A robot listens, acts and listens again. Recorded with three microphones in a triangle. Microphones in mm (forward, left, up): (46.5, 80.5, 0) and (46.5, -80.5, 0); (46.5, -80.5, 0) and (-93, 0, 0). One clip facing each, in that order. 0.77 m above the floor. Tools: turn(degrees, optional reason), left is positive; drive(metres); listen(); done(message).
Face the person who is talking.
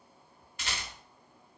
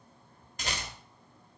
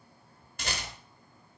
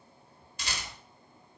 listen()
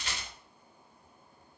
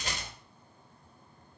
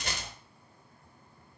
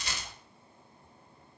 listen()
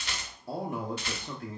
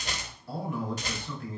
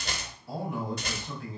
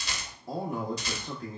turn(degrees=120, reason="The man speaking: 120° left.")
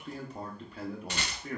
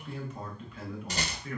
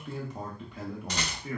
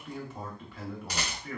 turn(degrees=40, reason="The man speaking is now 40° left.")
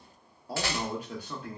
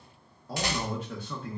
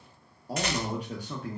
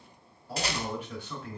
turn(degrees=10, reason="The man speaking is now 10° left.")
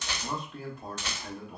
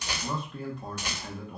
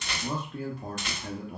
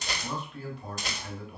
done("Facing the man speaking, under 1 m away.")